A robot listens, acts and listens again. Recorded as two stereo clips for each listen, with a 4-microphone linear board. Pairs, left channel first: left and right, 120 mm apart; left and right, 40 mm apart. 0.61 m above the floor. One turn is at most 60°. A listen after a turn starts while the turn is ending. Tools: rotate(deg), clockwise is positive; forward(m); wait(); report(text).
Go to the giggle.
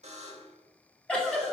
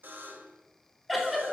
rotate(-30)
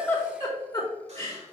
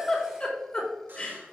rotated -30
rotate(-60)
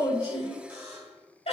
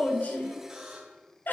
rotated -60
rotate(-60)
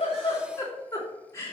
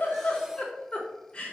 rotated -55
rotate(-25)
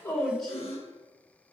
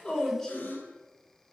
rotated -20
forward(1.0)
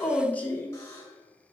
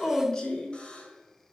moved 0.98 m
rotate(-20)
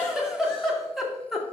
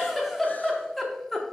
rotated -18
forward(1.0)
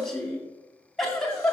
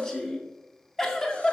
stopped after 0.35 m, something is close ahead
rotate(-10)
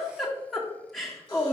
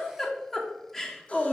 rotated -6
report("Arrived at the giggle, straight ahead.")